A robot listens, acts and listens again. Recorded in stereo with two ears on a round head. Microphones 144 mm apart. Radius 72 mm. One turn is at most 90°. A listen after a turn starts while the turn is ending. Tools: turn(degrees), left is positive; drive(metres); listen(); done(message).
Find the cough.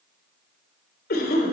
turn(degrees=60)
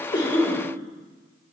done("Facing the cough, 2 to 4 m away.")